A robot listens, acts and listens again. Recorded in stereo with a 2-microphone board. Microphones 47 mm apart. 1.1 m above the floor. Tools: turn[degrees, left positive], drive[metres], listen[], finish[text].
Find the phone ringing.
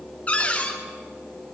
Action: listen[]
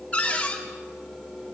Action: listen[]
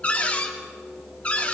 Action: finish[I can't make out a phone ringing, only a cupboard door.]